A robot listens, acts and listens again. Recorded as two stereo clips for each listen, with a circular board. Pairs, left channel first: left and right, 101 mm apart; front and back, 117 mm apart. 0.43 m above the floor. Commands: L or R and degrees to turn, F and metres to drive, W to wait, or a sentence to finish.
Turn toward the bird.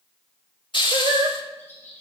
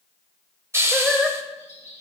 L20
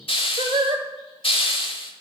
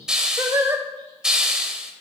W
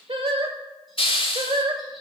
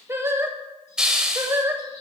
W
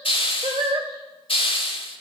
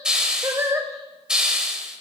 Facing where the bird came from. I can't hear it now.